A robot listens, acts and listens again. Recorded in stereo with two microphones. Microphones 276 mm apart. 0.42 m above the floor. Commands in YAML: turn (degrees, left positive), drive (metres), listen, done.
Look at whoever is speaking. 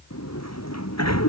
listen: true
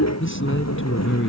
turn: 50
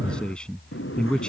done: "Facing the man speaking."